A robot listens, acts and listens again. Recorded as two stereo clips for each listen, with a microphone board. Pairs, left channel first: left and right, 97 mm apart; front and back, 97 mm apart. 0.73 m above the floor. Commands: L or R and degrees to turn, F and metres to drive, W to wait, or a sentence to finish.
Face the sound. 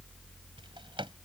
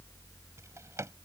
R120
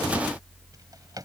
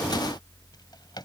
R40
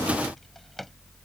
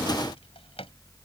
Found it: a drawer, straight ahead.